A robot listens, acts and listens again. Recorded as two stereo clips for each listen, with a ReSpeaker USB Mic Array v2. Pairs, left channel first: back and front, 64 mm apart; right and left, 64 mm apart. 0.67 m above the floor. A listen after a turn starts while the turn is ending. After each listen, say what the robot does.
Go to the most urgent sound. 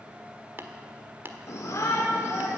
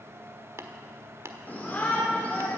Turn 150° right.
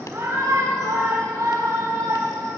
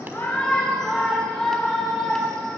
Turn 10° right.
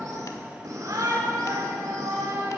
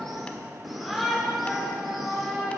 Drive 1.0 m forward.
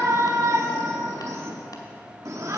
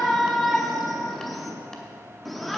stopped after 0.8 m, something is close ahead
I am next to the shout.